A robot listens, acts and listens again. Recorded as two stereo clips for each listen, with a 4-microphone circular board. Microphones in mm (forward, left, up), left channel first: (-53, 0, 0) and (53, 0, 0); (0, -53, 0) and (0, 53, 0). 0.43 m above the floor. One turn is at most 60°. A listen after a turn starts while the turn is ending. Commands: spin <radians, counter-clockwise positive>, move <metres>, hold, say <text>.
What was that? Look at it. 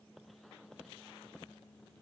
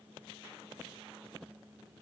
hold
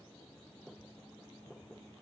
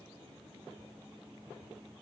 hold
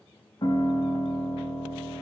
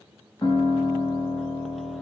spin -1.05
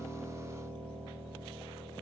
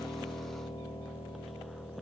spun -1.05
spin -1.05
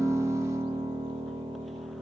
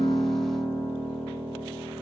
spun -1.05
say Facing the piano.